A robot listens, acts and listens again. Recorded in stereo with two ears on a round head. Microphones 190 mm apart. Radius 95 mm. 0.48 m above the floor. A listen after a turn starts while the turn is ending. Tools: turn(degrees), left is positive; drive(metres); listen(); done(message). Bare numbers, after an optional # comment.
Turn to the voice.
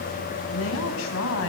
# The woman speaking: about 65° left or 115° left.
turn(65)
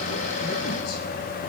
listen()
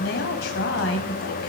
# So it is at 55° left.
turn(55)
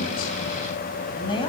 # The woman speaking is now 25° left.
turn(25)
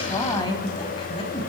# The woman speaking is now 25° left.
turn(25)
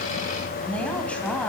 done("Facing the woman speaking.")